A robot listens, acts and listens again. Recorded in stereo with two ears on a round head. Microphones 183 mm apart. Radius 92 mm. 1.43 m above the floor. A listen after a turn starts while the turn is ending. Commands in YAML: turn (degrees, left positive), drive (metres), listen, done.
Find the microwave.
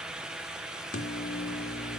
turn: 40
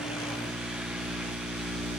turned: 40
done: "Facing the microwave, 1 to 2 m away."